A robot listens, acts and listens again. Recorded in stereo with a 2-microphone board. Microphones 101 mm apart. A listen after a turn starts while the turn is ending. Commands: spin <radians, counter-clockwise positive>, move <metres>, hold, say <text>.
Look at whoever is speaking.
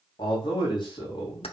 spin 0.87
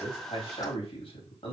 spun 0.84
spin 1.40
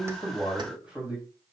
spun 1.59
spin -0.17
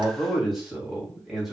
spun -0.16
say Facing the man speaking, 2 to 4 m away.